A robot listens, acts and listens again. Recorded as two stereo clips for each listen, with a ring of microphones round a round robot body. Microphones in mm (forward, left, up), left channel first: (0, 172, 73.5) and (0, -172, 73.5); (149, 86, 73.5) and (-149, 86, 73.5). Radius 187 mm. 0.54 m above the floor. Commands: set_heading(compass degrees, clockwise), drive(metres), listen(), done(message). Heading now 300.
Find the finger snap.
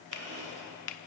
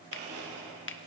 set_heading(250)
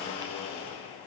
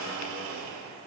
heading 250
listen()
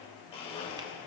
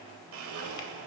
listen()
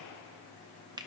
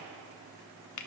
set_heading(265)
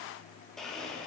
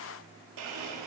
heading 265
listen()
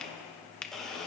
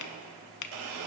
done("Found it: a finger snap, straight ahead.")